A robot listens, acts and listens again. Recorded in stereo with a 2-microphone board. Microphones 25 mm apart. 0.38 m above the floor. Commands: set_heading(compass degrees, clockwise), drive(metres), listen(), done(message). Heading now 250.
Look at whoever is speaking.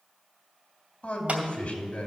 set_heading(195)
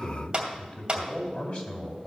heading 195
set_heading(135)
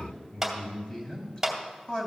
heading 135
set_heading(105)
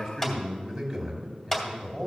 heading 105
done("Facing the man speaking.")